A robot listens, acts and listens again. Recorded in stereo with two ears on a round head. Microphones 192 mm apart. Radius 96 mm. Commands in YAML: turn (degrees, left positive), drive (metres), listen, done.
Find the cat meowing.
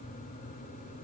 listen: true
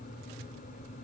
listen: true
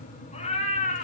turn: 35
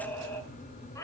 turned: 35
turn: 15
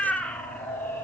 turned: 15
turn: 10
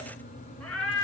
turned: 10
turn: 10
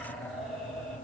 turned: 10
done: "Facing the cat meowing."